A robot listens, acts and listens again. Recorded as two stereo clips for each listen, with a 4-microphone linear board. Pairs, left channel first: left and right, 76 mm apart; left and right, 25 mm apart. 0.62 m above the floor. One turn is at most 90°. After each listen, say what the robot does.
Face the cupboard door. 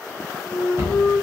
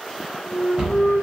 Turn 30° right.
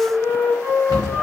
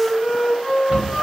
Turn 90° right.
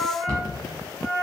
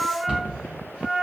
Turn 60° right.
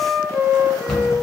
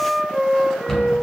Turn 10° left.
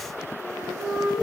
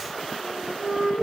Keep listening.
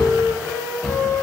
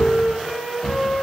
Found it: a cupboard door, straight ahead.